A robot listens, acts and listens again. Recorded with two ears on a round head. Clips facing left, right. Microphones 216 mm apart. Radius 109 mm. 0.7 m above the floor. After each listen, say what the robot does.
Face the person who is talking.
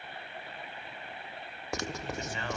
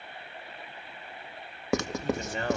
Turn 35° right.
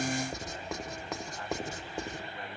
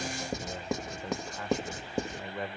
Turn 110° right.
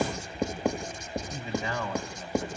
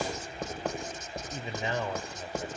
Turn 20° right.
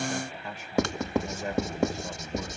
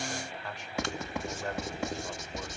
Found it: a man speaking, straight ahead.